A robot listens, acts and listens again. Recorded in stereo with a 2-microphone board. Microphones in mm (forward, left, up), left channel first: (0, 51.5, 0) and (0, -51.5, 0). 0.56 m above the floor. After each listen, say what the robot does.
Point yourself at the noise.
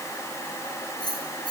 Turn 45° left.
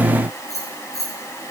Turn 95° left.
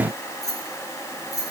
Turn 35° left.
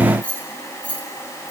Turn 15° left.
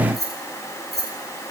Facing the keys jangling.